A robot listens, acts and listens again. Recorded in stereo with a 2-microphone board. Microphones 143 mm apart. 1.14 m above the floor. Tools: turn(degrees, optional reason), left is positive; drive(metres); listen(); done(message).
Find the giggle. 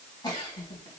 turn(degrees=30, reason="The giggle: about 30° left or 150° left.")
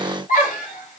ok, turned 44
turn(degrees=105, reason="So it is at 105° left.")
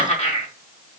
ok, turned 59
turn(degrees=50, reason="The giggle is now 50° left.")
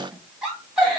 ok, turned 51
done("Found it: a giggle, straight ahead, 2 to 4 m away.")